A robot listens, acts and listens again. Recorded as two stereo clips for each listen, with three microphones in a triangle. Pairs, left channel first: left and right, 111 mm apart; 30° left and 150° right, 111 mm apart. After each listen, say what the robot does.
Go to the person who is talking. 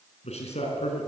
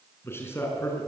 Turn 100° left.
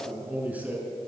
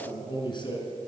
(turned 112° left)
Turn 15° right.
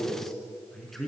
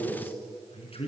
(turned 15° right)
Drive 1.0 m forward.
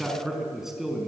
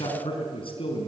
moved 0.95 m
Drive 1.0 m forward.
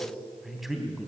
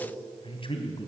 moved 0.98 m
Drive 1.0 m forward.
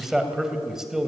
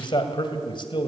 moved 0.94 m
Drive 1.0 m forward.
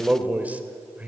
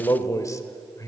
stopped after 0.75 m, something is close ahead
Turn 20° right.
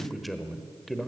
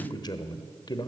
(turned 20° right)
I am next to the man speaking.